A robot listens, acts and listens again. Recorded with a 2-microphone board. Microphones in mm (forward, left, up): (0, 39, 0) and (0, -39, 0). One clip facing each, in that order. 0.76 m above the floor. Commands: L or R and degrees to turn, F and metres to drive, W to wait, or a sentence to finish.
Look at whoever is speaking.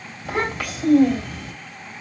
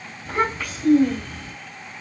L90
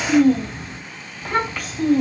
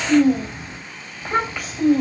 R10
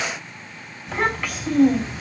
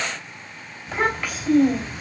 Found it: a child speaking, straight ahead, 2 to 4 m away.